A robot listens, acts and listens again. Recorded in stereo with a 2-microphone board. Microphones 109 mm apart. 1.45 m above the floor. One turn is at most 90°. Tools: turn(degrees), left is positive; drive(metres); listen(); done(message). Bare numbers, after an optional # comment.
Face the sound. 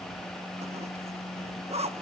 turn(-90)
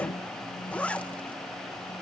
# So it is at 15° left.
turn(15)
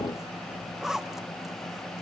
done("Found it: a zipper, straight ahead, 1 to 2 m away.")